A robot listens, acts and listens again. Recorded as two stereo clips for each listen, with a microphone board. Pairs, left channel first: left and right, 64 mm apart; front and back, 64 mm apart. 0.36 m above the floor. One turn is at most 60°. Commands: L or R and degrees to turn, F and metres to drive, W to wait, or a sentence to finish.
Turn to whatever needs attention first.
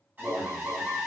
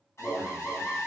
R30
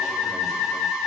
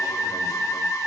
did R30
W
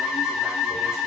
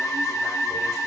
W
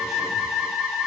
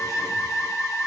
I heard an alarm from this way, but can't make it out now.